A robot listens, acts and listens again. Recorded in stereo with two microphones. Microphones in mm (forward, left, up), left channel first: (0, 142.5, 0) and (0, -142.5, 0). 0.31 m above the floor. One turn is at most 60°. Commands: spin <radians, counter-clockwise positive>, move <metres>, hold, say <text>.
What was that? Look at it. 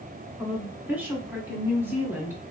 spin -0.52
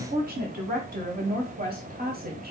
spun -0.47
spin -1.05
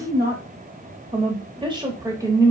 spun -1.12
spin -0.17
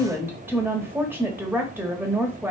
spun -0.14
spin -0.17
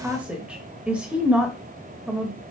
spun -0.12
say Facing the woman speaking.